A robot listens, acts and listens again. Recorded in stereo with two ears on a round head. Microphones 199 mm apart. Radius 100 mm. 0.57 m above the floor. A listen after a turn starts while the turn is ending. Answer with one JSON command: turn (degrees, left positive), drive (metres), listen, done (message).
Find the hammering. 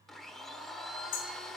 {"turn": 60}
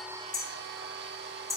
{"done": "Found it: hammering, straight ahead."}